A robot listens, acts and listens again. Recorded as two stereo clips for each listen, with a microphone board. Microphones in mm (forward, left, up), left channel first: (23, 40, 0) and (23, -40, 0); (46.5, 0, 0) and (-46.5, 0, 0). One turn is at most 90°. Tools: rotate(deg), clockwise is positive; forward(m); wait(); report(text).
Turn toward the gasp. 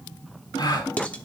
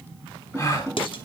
rotate(-55)
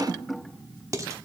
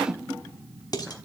report("Facing where the gasp came from. I can't hear it now.")